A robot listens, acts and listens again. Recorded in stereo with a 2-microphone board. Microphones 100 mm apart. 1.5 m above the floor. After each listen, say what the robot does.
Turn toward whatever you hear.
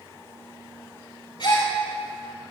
Turn 50° left.
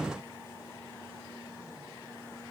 Keep listening.
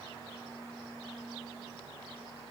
I heard a gasp, but can't make it out now. It was about straight ahead or 80° left.